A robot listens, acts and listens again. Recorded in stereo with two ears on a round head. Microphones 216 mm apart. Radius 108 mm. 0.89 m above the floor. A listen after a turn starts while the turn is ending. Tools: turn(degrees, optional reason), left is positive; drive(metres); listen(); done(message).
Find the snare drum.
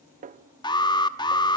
turn(degrees=-35, reason="The snare drum: about 35° right or 145° right.")
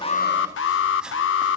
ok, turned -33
listen()
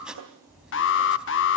turn(degrees=-110, reason="So it is at 110° right.")
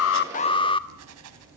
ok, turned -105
listen()
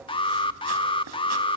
listen()
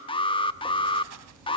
done("I heard a snare drum from this way, but can't make it out now.")